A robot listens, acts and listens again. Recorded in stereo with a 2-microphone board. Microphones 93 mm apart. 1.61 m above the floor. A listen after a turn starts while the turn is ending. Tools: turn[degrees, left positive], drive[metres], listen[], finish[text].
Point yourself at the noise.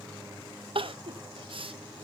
Thought: The crying: about 65° right or 115° right.
Action: turn[-65]
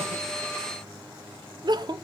Thought: So it is at 50° right.
Action: turn[-50]
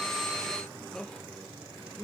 Action: finish[Facing the crying.]